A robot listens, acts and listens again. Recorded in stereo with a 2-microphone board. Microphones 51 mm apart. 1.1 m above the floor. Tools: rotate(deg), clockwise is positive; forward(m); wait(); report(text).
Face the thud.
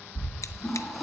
rotate(90)
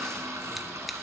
report("Facing where the thud came from. I can't hear it now.")